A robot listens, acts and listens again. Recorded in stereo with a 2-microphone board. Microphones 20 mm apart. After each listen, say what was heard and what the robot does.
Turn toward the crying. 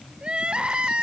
The crying: about 60° right or 120° right. Turn 60° right.
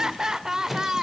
So it is at 35° right. Turn 35° right.
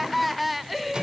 Facing the crying.